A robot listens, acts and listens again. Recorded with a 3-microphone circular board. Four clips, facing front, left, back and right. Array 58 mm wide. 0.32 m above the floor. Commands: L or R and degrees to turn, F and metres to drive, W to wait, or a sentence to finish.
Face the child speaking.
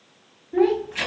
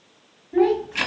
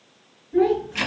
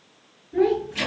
L50
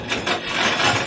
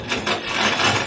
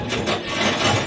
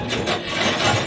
W
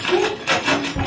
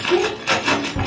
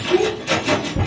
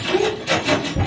Found it: a child speaking, straight ahead, 1 to 2 m away.